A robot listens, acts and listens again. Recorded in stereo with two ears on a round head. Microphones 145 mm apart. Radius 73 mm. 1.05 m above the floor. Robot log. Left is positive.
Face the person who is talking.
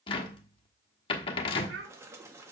cmd yaw -90
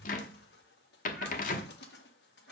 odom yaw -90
cmd idle
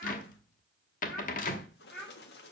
end: Found it: a child speaking, straight ahead, 2 to 4 m away.